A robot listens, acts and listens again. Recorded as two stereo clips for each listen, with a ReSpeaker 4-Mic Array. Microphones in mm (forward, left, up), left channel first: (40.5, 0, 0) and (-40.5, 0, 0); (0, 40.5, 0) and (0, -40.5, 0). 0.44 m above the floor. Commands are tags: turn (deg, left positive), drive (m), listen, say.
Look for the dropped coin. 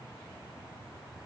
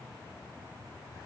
<listen/>
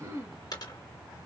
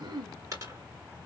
<turn deg="-40"/>
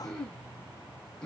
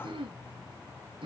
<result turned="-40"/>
<say>I heard a dropped coin from this way, but can't make it out now.</say>